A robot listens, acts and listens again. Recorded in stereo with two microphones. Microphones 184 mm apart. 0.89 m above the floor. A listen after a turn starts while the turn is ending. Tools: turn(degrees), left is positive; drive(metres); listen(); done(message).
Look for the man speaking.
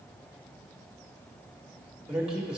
turn(degrees=-30)
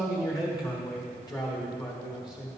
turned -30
turn(degrees=25)
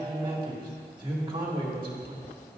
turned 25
turn(degrees=-25)
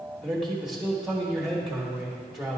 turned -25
done("Facing the man speaking, 1 to 2 m away.")